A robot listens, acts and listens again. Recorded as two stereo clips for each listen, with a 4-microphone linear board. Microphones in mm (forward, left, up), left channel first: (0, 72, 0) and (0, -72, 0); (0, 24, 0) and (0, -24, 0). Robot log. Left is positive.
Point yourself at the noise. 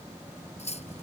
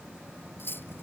note: The cutlery clinking: about 50° left or 130° left.
cmd yaw +50
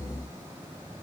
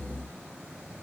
cmd idle
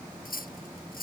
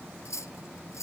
note: So it is at 80° left.
cmd yaw +80
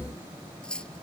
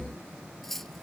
end: Facing the cutlery clinking.